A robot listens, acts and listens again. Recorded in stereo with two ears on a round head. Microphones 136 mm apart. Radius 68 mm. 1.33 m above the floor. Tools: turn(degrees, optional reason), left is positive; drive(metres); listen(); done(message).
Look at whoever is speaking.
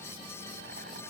listen()
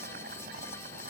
listen()
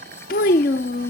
turn(degrees=60, reason="The child speaking: about 60° left or 120° left.")
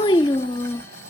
turn(degrees=35, reason="So it is at 35° left.")
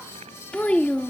turn(degrees=10, reason="The child speaking is now 10° left.")
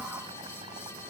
listen()
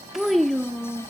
done("Found it: a child speaking, straight ahead.")